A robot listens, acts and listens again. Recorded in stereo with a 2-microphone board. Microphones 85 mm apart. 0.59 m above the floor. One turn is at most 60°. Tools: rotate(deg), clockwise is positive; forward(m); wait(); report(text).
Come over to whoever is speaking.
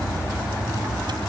wait()
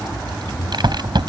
wait()
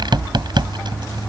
report("I can't make out anyone speaking, only a rattle.")